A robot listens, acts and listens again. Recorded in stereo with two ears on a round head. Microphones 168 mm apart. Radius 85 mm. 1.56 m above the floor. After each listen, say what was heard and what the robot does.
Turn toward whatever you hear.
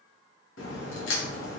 The crack: about 75° left or 105° left. Turn 75° left.
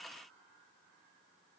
Keep listening.
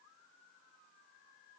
I heard a crack, but can't make it out now. It was about straight ahead or 30° left.